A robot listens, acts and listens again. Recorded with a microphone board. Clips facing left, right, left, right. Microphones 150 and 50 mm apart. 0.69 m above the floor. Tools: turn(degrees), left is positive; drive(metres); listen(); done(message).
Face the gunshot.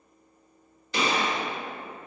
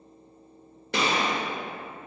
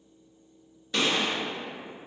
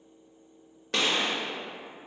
turn(degrees=-65)
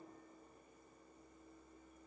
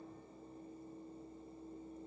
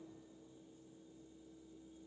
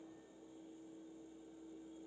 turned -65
listen()
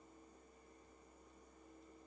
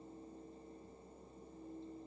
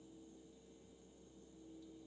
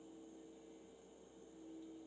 done("I heard a gunshot, but can't make it out now. It was about straight ahead or 50° right.")